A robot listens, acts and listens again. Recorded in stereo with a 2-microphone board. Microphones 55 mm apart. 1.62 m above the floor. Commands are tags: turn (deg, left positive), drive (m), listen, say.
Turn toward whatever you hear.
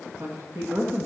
<turn deg="-70"/>
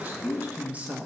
<turn deg="-25"/>
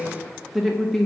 <say>Found it: a woman speaking, straight ahead, 1 to 2 m away.</say>